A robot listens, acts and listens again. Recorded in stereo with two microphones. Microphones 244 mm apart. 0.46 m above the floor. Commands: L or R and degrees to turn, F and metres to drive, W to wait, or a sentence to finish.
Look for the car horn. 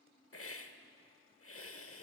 W
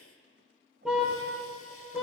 R30
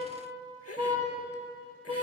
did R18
R160
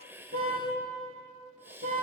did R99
R60
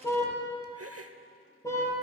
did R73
L15
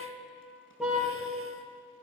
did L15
Facing the car horn, over 4 m away.